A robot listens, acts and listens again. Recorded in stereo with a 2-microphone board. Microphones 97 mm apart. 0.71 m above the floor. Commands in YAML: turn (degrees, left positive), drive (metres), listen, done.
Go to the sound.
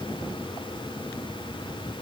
listen: true
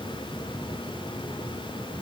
listen: true
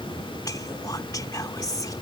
turn: 40
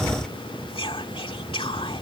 turn: 100
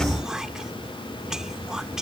drive: 1.0
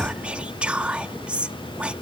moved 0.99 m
turn: -15
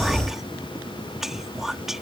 drive: 1.0
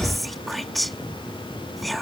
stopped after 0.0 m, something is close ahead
done: "I am next to the whispering."